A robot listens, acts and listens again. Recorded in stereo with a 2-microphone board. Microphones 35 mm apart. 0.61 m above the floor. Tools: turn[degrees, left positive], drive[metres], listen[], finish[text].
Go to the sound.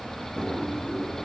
Thought: The drawer: about 45° left or 135° left.
Action: turn[45]
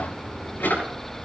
Thought: So it is at 95° left.
Action: turn[95]
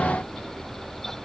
Action: listen[]
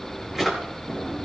Action: drive[1.0]
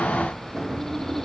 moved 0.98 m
Thought: The drawer is now 10° right.
Action: turn[-10]
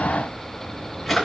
Action: drive[1.0]
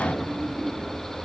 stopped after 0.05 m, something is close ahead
Action: finish[Something is in my way. I am facing the drawer but have not reached it.]